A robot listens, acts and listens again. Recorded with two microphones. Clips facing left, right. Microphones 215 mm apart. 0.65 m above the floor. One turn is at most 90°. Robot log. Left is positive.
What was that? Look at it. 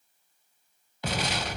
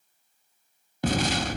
note: The explosion: about 50° right or 130° right.
cmd yaw -50
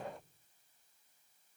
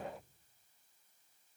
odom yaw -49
cmd idle
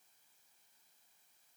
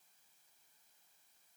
end: I heard an explosion, but can't make it out now. It was about straight ahead or 80° right.